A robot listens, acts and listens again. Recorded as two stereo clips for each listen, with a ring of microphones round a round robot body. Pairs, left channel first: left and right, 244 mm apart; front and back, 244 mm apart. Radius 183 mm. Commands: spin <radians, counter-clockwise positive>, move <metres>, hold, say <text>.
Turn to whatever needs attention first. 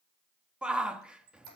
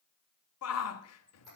say Found it: a shout, straight ahead.